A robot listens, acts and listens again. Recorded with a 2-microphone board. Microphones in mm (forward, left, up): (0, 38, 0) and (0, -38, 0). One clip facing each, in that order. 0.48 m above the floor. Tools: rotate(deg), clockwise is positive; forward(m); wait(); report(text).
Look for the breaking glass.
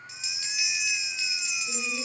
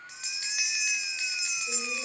wait()
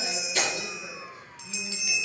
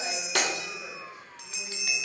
rotate(65)
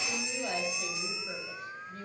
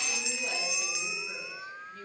wait()
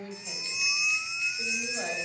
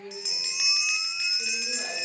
report("I heard breaking glass, but can't make it out now. It was about straight ahead or 50° right.")